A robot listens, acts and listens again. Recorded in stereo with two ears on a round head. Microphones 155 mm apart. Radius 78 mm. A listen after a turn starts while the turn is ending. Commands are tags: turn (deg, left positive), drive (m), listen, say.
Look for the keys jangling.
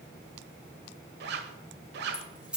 <turn deg="-30"/>
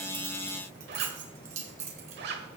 <turn deg="-140"/>
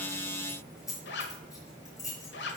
<turn deg="20"/>
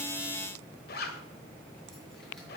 <listen/>
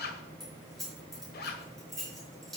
<say>Found it: keys jangling, straight ahead, over 4 m away.</say>